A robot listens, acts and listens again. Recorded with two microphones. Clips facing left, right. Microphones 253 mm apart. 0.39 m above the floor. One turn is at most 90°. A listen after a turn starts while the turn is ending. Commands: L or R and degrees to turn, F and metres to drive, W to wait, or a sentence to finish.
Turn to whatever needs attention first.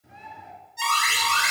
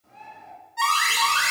R70
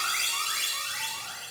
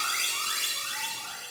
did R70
R20
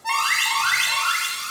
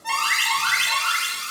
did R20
Facing the alarm.